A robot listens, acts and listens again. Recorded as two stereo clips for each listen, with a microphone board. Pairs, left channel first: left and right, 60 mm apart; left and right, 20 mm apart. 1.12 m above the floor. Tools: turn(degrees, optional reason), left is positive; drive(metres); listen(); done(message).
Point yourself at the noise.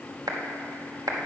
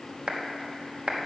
turn(degrees=-90)
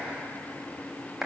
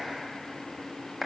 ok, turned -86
done("Facing the clap, 1 to 2 m away.")